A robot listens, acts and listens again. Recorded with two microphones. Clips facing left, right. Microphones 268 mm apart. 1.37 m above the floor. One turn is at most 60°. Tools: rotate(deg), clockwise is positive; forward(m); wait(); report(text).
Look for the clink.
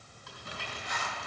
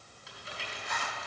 wait()
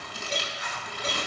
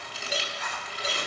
rotate(30)
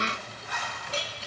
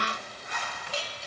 rotate(-25)
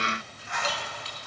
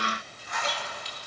wait()
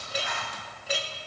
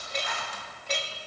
report("Facing the clink.")